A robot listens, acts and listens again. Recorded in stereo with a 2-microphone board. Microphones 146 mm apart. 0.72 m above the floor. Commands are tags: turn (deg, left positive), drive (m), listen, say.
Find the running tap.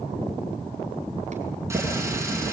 <turn deg="-20"/>
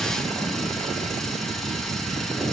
<say>Facing the running tap.</say>